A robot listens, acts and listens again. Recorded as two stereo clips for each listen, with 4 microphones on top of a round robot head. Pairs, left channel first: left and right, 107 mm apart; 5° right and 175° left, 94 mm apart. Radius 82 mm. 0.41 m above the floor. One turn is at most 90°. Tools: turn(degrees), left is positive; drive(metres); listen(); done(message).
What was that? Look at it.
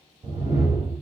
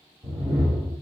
turn(degrees=-90)
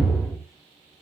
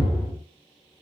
turn(degrees=-50)
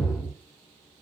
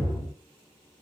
done("Found it: a whoosh, straight ahead.")